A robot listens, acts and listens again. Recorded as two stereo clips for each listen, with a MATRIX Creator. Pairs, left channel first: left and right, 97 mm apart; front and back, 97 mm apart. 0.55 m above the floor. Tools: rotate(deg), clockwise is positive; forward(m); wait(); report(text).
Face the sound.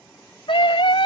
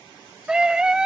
rotate(-100)
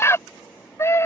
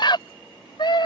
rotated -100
rotate(-30)
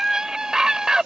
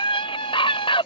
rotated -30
rotate(10)
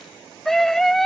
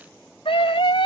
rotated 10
report("Facing the scream.")